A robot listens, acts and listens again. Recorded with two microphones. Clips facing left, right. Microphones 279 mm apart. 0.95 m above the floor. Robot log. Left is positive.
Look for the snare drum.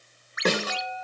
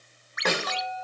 note: The snare drum: about 35° left or 145° left.
cmd yaw +35
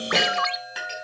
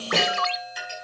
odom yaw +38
cmd idle
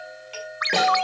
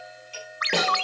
cmd idle
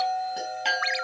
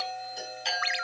end: I heard a snare drum, but can't make it out now. It was about straight ahead or 105° left.